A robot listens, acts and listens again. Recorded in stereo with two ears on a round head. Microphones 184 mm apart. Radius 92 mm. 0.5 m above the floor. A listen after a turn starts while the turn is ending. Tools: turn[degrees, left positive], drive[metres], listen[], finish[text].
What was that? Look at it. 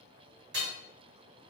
Thought: The hammering: about 55° right or 125° right.
Action: turn[-55]
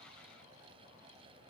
Action: listen[]
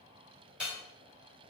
Action: finish[Found it: hammering, straight ahead, 1 to 2 m away.]